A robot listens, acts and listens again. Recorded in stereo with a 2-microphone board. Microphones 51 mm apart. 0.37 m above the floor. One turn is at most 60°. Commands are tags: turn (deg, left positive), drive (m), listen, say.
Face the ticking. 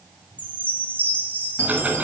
<turn deg="-30"/>
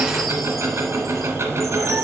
<turn deg="-60"/>
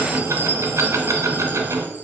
<turn deg="-60"/>
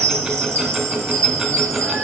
<turn deg="-15"/>
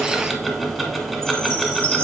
<say>Found it: ticking, straight ahead.</say>